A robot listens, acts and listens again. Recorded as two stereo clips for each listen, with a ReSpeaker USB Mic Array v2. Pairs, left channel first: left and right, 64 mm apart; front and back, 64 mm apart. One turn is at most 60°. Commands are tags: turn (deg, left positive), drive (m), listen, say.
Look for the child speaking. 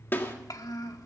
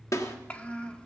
<turn deg="60"/>
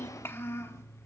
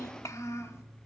<turn deg="45"/>
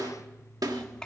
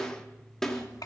<turn deg="15"/>
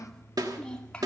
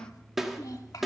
<turn deg="15"/>
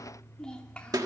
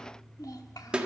<turn deg="15"/>
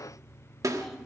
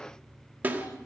<listen/>
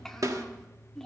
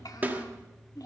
<say>Facing the child speaking.</say>